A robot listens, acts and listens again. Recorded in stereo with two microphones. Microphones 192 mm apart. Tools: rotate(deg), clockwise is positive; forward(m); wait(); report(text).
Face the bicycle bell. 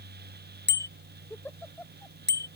rotate(65)
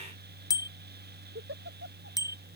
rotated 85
rotate(-20)
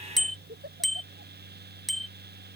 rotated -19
report("Found it: a bicycle bell, straight ahead.")